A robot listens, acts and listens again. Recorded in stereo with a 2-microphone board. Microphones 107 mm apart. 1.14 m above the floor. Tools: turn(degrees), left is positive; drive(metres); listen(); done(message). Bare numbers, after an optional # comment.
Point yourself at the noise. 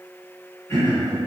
# The throat clearing: about 30° left or 150° left.
turn(30)
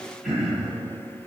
done("Found it: throat clearing, straight ahead, 1 to 2 m away.")